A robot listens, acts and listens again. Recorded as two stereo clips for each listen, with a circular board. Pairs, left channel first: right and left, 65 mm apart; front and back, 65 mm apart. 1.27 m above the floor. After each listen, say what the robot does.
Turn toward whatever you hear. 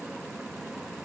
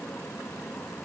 Keep listening.
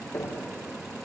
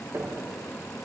Turn 130° right.
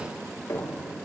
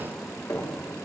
Turn 40° right.
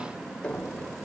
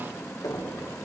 Turn 15° right.
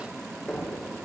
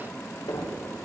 Facing the knocking, 2 to 4 m away.